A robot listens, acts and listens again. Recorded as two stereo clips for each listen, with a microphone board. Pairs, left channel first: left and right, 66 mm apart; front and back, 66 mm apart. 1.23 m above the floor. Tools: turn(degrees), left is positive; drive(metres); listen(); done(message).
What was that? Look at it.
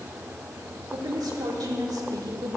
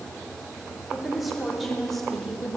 turn(degrees=-85)
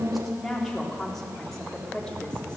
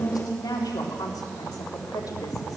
turn(degrees=10)
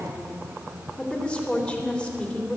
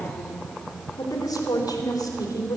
turn(degrees=15)
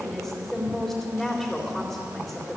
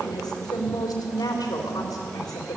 done("Facing the woman speaking, 2 to 4 m away.")